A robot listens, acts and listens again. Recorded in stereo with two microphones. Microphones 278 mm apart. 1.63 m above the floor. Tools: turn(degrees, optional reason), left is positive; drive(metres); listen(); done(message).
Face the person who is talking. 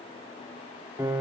listen()
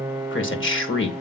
turn(degrees=45, reason="The man speaking: about 45° left or 135° left.")
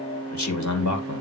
turn(degrees=90, reason="So it is at 90° left.")
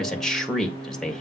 done("Facing the man speaking, 1 to 2 m away.")